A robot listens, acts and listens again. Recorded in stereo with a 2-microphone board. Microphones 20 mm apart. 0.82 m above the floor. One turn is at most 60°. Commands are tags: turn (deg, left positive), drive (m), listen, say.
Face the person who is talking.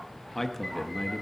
<turn deg="30"/>
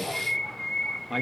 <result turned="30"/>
<turn deg="-15"/>
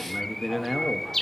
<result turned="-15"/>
<say>Facing the man speaking.</say>